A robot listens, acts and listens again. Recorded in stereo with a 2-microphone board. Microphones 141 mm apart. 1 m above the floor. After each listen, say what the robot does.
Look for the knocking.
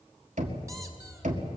Turn 70° right.
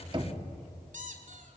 Turn 40° right.
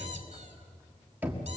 Turn 15° right.
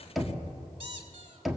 Facing the knocking.